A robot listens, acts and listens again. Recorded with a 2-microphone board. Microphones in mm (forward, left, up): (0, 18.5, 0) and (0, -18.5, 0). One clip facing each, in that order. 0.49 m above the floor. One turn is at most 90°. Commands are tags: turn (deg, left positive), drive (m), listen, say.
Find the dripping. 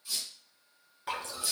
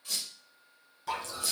<turn deg="25"/>
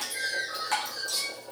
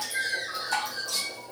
<turn deg="90"/>
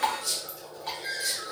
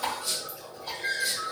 <turn deg="65"/>
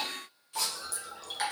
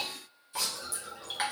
<turn deg="-20"/>
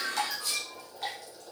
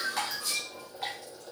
<say>Facing the dripping.</say>